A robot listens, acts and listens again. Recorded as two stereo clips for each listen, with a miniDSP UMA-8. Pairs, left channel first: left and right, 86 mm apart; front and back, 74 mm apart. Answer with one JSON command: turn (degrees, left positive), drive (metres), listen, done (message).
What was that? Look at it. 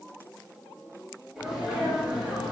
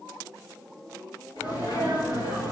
{"turn": -10}
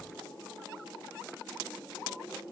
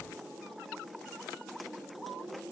{"done": "Facing where the sneeze came from. I can't hear it now."}